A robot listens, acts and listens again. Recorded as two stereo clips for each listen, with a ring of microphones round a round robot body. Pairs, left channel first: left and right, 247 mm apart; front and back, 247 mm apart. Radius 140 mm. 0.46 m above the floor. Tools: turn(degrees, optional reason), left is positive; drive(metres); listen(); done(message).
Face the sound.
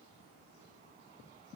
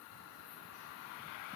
listen()
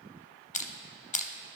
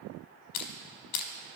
turn(degrees=30, reason="The crushing: 30° left.")
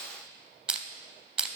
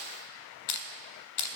done("Found it: crushing, straight ahead.")